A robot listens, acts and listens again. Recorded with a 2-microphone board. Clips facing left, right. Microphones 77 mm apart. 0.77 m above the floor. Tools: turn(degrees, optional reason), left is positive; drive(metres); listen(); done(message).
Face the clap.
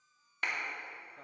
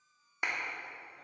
turn(degrees=-15, reason="The clap: about 15° right or 165° right.")
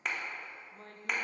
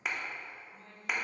done("Facing the clap.")